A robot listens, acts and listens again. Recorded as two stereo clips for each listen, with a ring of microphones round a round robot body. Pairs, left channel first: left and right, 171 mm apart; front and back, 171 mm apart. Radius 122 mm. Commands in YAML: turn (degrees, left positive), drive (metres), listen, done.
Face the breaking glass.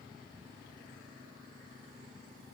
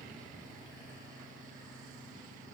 listen: true
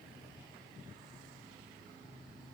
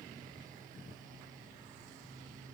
listen: true
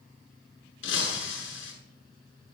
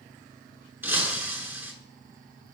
turn: 100
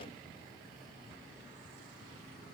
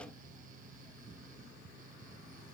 done: "I heard breaking glass from this way, but can't make it out now."